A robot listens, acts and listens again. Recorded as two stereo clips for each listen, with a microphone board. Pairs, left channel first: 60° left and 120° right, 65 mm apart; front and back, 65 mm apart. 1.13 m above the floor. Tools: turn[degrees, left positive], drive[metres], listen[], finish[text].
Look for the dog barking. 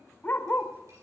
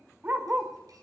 Thought: The dog barking: 115° left.
Action: turn[115]
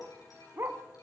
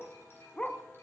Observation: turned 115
Thought: The dog barking is now 75° right.
Action: turn[-75]
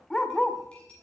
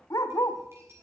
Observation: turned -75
Thought: The dog barking is now 25° right.
Action: turn[-25]
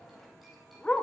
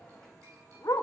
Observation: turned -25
Thought: The dog barking is now 15° right.
Action: turn[-15]
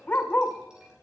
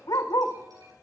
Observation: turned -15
Action: finish[Facing the dog barking, 1 to 2 m away.]